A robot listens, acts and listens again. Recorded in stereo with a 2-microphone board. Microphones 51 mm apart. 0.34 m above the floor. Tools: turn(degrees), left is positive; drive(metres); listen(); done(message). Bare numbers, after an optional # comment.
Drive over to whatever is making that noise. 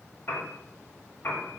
# The piano: about 40° left or 140° left.
turn(40)
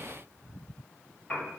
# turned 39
# So it is at 10° left.
turn(10)
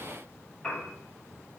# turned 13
drive(1.0)
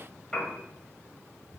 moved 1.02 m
drive(1.0)
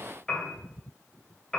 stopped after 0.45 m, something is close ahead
# The piano is now 15° left.
turn(15)
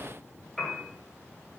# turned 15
done("I am next to the piano.")